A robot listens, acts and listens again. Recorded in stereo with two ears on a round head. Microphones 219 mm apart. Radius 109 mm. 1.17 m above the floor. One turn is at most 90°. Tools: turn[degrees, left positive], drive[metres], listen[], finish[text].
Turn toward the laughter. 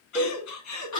Action: turn[90]
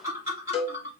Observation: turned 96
Thought: So it is at 10° right.
Action: turn[-10]
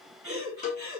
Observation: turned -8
Action: finish[Facing the laughter, 2 to 4 m away.]